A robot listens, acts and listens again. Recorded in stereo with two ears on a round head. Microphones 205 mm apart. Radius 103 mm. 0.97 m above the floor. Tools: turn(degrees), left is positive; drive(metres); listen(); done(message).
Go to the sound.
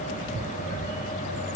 listen()
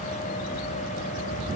listen()
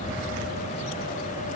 done("I can't make out anything to turn to.")